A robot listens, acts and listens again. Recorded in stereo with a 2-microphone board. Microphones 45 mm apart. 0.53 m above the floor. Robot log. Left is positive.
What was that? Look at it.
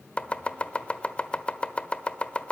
note: The chopping: about 25° left or 155° left.
cmd yaw +25
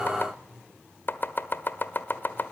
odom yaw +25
note: So it is at 125° left.
cmd yaw +125
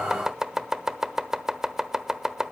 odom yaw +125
note: The chopping is now 10° right.
cmd yaw -10
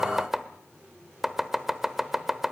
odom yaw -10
end: Found it: chopping, straight ahead.